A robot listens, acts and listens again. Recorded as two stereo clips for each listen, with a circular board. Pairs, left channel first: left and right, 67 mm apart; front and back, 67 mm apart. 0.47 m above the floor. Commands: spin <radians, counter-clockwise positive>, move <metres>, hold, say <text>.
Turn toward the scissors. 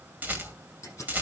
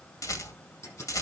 spin 0.79
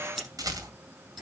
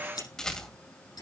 say Facing the scissors.